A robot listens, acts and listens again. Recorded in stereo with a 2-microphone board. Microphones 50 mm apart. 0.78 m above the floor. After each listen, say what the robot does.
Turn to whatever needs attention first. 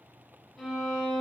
Keep listening.
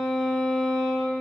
Keep listening.
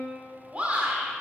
Turn 25° right.
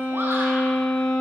Keep listening.
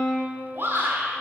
Turn 125° right.
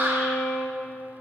Turn 50° right.
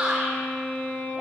Turn 20° right.
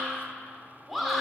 Facing the shout.